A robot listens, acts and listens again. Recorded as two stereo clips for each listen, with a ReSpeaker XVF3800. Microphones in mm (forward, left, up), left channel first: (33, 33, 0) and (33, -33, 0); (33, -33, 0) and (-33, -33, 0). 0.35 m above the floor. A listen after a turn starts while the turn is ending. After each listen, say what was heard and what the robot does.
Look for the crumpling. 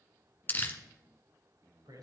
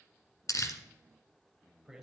The crumpling: 30° left. Turn 30° left.
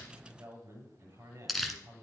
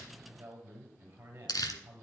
Found it: crumpling, straight ahead, 1 to 2 m away.